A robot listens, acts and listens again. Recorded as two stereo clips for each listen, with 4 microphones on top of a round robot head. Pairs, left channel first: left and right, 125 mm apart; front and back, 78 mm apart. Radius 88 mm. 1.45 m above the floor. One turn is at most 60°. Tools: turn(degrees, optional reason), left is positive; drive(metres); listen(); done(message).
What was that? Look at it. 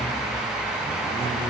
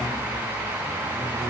listen()
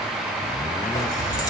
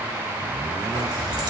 turn(degrees=60, reason="The keys jangling: 150° left.")
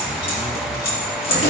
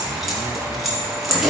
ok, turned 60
turn(degrees=60, reason="The keys jangling is now 90° left.")
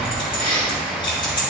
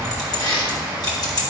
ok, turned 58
turn(degrees=30, reason="The keys jangling is now 30° left.")
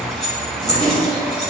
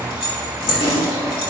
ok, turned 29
done("Found it: keys jangling, straight ahead, 2 to 4 m away.")